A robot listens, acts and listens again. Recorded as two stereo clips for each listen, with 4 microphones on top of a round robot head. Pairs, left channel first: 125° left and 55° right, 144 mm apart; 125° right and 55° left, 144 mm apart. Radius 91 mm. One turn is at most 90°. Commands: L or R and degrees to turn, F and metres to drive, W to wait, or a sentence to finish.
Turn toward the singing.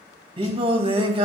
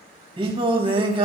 Found it: singing, straight ahead.